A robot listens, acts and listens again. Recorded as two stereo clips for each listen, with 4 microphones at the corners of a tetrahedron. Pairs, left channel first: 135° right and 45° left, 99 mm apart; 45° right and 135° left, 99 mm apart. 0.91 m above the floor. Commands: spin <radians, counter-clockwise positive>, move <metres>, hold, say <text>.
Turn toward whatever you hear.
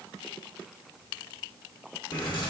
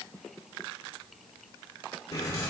spin -1.75
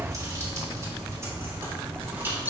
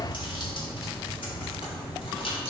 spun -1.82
spin -0.44
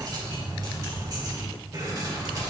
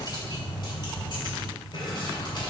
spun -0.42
spin -0.17
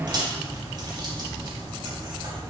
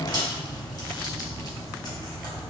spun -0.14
say Found it: keys jangling, straight ahead.